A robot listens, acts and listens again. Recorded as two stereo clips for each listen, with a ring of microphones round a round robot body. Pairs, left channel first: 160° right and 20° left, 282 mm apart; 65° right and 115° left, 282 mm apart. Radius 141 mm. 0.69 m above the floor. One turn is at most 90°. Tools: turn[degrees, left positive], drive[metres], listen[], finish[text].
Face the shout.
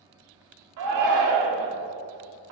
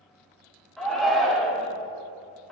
Thought: The shout: 20° left.
Action: turn[20]
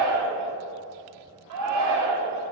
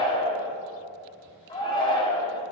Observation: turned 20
Action: finish[Found it: a shout, straight ahead, 1 to 2 m away.]